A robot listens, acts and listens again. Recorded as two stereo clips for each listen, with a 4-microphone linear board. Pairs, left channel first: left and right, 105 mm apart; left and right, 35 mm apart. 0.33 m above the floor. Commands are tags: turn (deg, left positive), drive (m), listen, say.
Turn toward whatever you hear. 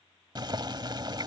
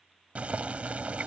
<turn deg="-50"/>
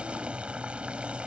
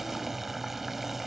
<turn deg="-15"/>
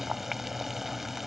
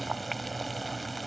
<say>Facing the boiling.</say>